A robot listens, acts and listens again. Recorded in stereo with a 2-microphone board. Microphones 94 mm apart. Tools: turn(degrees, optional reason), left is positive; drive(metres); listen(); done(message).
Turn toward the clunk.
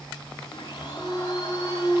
turn(degrees=30)
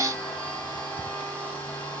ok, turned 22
listen()
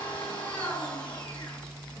done("I heard a clunk, but can't make it out now. It was about 15° right or 150° left.")